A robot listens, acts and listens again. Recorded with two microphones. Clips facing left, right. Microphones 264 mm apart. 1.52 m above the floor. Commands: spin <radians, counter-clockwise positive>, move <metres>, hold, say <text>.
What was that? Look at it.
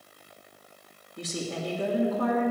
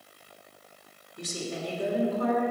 spin 1.57
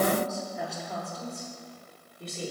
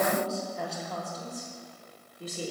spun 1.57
say Facing the woman speaking, 2 to 4 m away.